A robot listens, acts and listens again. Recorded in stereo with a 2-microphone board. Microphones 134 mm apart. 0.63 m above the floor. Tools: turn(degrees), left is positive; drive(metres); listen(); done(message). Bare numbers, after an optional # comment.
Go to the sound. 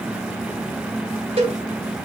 # The cowbell: about 45° right or 135° right.
turn(-45)
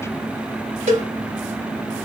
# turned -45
# So it is at 90° right.
turn(-90)
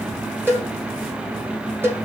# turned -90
# The cowbell is now 15° right.
turn(-15)
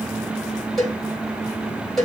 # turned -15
drive(1.0)
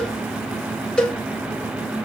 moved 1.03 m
drive(1.0)
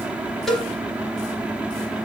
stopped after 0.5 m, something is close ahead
done("I am next to the cowbell.")